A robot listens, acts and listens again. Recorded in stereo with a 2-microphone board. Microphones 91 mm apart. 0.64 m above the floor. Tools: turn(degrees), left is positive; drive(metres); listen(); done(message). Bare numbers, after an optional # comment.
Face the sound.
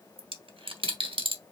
# The dropped coin: about 75° right or 105° right.
turn(-75)
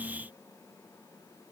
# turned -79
listen()
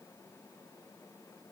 done("I heard a dropped coin, but can't make it out now. It was about 5° left or 25° right.")